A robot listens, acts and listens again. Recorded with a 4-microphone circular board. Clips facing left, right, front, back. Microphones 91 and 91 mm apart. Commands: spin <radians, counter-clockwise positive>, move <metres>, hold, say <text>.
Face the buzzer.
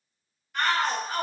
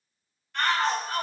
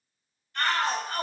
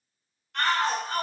hold
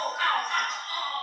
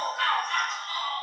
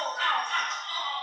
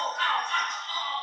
hold
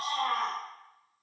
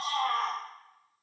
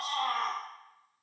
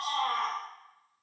say I can't make out a buzzer, only a shout.